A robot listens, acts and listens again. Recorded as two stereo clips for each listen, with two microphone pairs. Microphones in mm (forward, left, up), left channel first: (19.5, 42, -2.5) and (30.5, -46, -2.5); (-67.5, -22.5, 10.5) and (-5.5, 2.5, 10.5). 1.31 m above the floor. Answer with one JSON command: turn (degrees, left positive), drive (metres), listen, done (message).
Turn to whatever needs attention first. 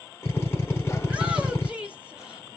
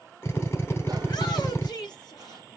{"turn": -160}
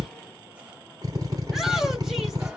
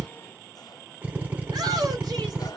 {"done": "Found it: a shout, straight ahead."}